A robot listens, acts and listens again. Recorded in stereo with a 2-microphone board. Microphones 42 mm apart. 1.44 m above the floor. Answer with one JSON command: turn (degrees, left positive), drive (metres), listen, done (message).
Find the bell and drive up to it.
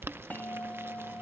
{"turn": 45}
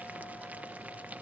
{"listen": true}
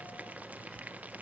{"listen": true}
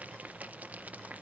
{"done": "I heard a bell, but can't make it out now. It was about straight ahead or 90° left. I did not reach it."}